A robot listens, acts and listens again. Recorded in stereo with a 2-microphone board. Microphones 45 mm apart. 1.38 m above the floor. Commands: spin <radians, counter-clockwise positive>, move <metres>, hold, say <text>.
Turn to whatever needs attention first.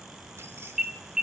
spin -0.52
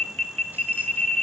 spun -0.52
spin 0.35
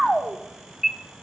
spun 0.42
say Found it: an alarm, straight ahead, under 1 m away.